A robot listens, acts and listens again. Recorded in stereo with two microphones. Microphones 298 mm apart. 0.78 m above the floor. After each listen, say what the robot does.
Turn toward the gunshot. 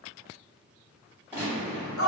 Turn 30° right.
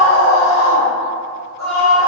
Keep listening.
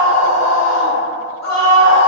I heard a gunshot, but can't make it out now. It was about 25° left or 145° right.